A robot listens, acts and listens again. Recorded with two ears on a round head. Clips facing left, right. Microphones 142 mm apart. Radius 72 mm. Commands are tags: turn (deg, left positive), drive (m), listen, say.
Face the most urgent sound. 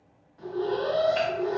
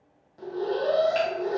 <turn deg="-45"/>
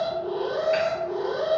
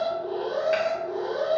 <say>Facing the alarm, under 1 m away.</say>